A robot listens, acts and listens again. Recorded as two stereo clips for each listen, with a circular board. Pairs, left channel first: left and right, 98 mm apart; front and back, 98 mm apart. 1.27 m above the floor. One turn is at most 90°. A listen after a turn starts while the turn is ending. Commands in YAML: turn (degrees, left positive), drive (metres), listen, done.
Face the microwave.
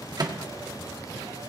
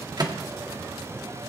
turn: -90
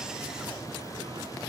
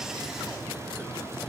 turn: -45
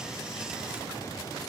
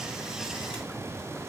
listen: true
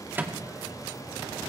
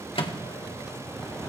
turn: -20
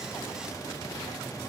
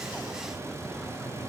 listen: true
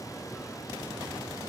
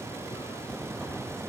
listen: true
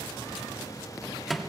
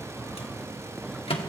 done: "Found it: a microwave, straight ahead, 1 to 2 m away."